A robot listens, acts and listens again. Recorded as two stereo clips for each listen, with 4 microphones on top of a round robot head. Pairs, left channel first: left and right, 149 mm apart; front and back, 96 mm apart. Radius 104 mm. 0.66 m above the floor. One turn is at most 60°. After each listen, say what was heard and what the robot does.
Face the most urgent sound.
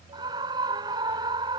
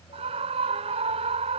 The scream: 155° right. Turn 60° right.
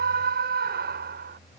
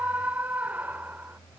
The scream is now 100° right. Turn 60° right.
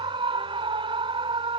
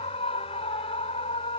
The scream is now 35° right. Turn 35° right.
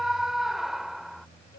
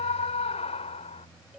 Found it: a scream, straight ahead.